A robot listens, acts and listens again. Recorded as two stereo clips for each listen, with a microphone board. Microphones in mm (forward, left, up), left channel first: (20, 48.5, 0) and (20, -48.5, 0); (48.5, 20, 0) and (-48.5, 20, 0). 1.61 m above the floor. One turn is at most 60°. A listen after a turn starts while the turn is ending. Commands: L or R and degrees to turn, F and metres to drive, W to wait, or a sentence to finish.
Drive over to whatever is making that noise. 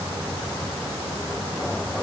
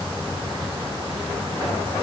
W
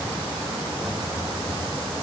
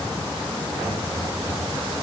W
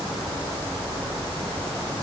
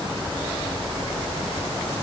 I can't make out anything to turn to.